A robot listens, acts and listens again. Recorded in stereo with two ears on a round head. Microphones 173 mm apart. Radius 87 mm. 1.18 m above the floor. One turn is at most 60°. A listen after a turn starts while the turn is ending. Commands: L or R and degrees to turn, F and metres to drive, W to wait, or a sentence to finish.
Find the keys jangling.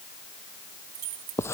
R60
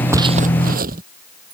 R30
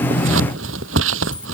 W
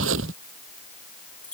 Facing the keys jangling.